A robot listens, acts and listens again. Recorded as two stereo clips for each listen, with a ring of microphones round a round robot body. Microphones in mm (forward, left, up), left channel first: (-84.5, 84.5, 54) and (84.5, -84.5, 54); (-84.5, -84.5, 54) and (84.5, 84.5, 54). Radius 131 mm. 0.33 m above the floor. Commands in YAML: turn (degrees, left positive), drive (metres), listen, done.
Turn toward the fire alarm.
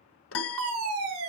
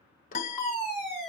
turn: -50
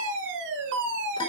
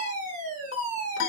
turn: -10
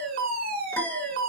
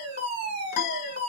done: "Facing the fire alarm."